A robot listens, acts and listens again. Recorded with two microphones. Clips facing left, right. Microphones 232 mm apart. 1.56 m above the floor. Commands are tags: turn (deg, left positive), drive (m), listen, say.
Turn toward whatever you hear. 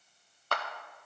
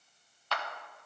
<turn deg="50"/>
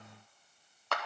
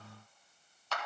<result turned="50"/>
<turn deg="75"/>
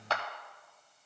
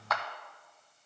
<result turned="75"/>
<turn deg="35"/>
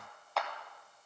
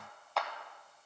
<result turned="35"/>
<say>Facing the clap.</say>